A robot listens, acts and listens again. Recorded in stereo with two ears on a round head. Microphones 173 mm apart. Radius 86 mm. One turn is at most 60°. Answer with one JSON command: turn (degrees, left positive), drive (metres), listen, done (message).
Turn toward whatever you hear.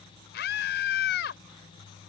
{"turn": 60}
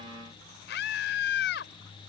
{"turn": 60}
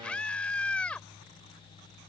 {"done": "Found it: a scream, straight ahead."}